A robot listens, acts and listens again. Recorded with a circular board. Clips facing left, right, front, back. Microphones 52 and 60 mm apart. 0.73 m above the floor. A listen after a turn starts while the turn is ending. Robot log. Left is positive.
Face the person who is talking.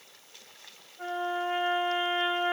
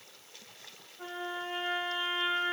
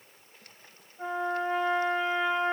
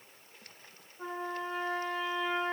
cmd idle
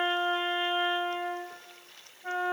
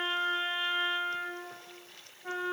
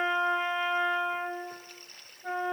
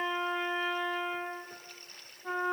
cmd idle
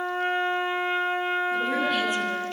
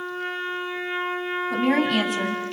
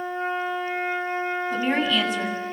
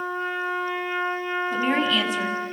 note: The woman speaking: 85° right.
cmd yaw -85
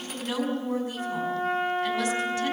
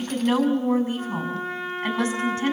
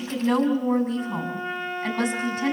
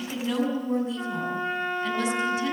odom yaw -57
note: The woman speaking is now 30° right.
cmd yaw -30
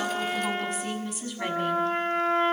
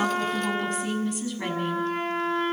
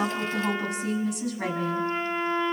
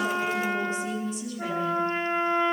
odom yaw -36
end: Facing the woman speaking, over 4 m away.